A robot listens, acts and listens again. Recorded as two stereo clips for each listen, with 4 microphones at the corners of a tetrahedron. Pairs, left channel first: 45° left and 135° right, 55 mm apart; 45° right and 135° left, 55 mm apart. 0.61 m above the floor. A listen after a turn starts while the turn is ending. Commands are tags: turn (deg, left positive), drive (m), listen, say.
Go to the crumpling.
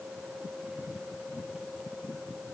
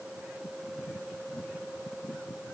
<listen/>
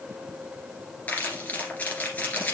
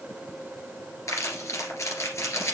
<turn deg="-15"/>
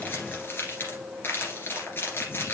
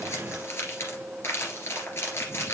<drive m="1.0"/>
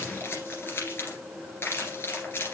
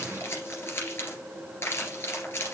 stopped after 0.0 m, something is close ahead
<say>Blocked. The crumpling is further on, straight ahead.</say>